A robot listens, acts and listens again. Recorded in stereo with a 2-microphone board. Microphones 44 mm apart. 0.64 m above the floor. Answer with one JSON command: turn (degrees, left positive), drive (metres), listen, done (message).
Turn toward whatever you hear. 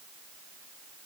{"listen": true}
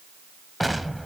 {"turn": 30}
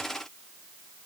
{"listen": true}
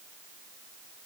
{"done": "I heard an explosion, but can't make it out now. It was about 30° right or 150° left."}